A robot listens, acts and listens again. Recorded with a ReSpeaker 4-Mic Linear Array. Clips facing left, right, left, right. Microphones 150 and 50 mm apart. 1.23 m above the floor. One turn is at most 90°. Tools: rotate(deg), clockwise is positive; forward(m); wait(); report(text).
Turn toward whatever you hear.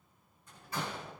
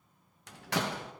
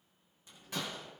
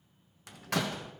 rotate(90)
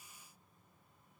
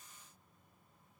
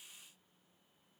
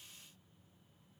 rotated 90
report("I heard a door slam from this way, but can't make it out now.")